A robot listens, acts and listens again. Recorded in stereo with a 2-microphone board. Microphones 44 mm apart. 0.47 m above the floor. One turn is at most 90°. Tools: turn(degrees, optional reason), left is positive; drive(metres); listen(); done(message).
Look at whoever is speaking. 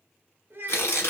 turn(degrees=-50, reason="The child speaking: about 50° right or 130° right.")
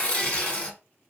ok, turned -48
listen()
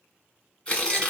listen()
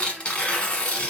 done("I heard a child speaking, but can't make it out now. It was about 5° right or 80° right.")